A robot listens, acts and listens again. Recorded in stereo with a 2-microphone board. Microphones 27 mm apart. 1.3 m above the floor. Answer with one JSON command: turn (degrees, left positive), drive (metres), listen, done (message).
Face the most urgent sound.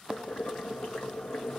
{"listen": true}
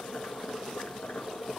{"listen": true}
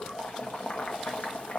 {"done": "I can't make out anything urgent, only boiling."}